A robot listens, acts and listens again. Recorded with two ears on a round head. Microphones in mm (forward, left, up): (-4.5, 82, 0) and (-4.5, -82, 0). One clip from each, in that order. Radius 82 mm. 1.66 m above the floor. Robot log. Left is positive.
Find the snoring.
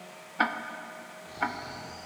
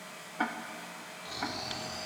cmd yaw -90
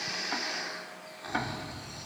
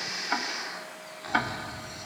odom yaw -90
end: Facing the snoring.